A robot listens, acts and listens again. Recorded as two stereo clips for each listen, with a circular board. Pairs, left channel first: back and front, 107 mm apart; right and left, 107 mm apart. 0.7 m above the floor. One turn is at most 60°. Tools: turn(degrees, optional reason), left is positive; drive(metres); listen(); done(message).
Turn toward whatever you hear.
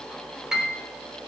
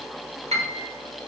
turn(degrees=60, reason="The piano: 85° left.")
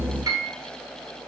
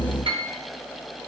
turn(degrees=55, reason="The piano is now 55° left.")
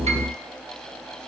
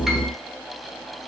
listen()
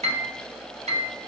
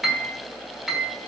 done("Found it: a piano, straight ahead.")